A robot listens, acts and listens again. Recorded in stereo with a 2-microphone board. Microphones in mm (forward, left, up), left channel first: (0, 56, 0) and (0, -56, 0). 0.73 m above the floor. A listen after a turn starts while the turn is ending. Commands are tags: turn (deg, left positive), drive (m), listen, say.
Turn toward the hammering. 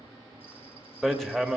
<turn deg="30"/>
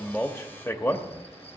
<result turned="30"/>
<turn deg="145"/>
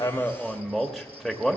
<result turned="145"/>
<say>Facing the hammering.</say>